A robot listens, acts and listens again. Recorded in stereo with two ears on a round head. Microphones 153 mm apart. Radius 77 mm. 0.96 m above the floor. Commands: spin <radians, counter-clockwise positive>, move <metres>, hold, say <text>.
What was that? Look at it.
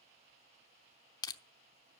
spin 0.44
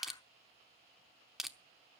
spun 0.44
say Facing the crushing.